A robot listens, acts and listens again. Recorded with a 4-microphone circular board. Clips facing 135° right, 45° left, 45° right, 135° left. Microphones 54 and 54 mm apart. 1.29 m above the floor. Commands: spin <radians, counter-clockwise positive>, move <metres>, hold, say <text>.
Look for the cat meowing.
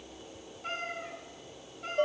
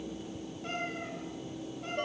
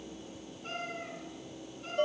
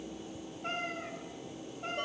spin 2.62
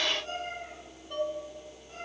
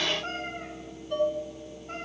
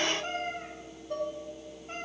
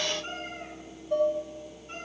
spin 0.17
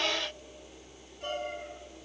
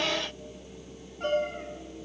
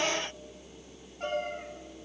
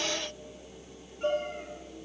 hold
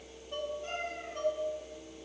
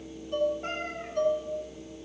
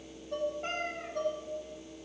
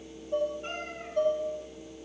say Facing the cat meowing, 2 to 4 m away.